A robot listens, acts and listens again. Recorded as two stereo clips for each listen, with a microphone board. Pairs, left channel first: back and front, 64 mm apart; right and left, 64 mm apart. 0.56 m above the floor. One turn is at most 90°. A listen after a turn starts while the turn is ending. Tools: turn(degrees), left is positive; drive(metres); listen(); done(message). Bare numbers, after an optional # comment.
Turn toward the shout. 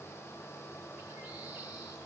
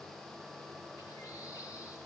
listen()
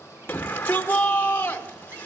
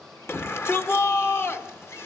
# The shout: 125° right.
turn(-90)
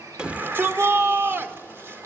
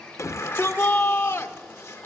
# The shout is now 45° right.
turn(-45)
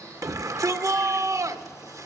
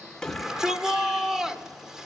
# The shout is now 10° left.
turn(10)
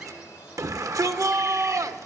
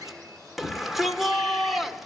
done("Facing the shout.")